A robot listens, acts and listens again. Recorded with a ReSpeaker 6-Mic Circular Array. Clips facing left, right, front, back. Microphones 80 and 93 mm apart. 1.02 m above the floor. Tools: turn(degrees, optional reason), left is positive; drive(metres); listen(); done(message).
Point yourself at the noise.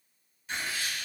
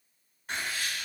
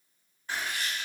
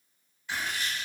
turn(degrees=-50, reason="The writing: 50° right.")
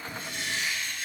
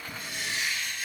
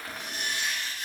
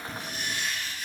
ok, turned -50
done("Found it: writing, straight ahead.")